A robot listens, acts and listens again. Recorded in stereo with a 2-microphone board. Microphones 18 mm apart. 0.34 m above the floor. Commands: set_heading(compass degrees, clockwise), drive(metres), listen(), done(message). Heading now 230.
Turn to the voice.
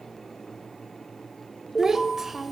set_heading(245)
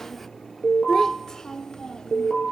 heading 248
set_heading(208)
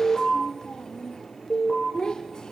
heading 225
set_heading(180)
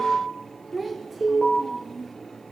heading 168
done("Facing the child speaking.")